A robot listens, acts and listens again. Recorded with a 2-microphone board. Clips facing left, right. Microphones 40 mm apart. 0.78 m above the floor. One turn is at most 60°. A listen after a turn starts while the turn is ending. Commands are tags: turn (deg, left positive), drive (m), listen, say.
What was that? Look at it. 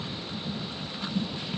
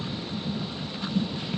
<listen/>
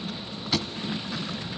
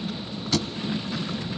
<turn deg="30"/>
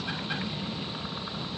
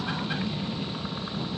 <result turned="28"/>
<listen/>
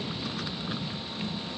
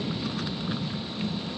<say>I heard a thud, but can't make it out now. It was about 15° right or 140° left.</say>